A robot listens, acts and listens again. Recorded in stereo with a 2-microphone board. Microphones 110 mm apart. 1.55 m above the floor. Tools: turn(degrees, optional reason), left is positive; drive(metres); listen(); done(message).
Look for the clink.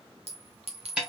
turn(degrees=-70, reason="The clink: about 70° right or 110° right.")
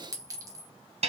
turn(degrees=-30, reason="So it is at 30° right.")
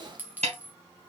turn(degrees=-15, reason="The clink is now 15° right.")
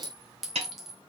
done("Found it: a clink, straight ahead, 1 to 2 m away.")